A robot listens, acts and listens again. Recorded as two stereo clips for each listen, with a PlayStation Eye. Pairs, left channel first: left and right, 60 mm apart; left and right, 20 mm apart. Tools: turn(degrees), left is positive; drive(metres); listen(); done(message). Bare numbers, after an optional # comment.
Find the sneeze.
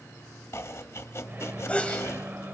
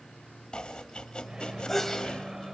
# The sneeze: about 25° left or 155° left.
turn(25)
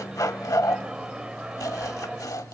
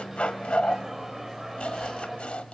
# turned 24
listen()
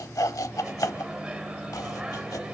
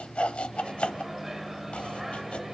done("I heard a sneeze, but can't make it out now. It was about straight ahead or 135° left.")